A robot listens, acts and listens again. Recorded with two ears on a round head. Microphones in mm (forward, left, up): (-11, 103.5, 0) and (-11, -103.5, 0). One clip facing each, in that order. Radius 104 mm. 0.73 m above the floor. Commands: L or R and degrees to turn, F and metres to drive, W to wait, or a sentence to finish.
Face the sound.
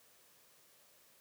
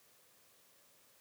W
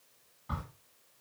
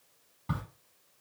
R65
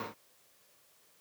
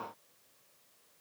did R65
W
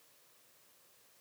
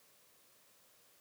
I heard a crack, but can't make it out now. It was about straight ahead or 50° right.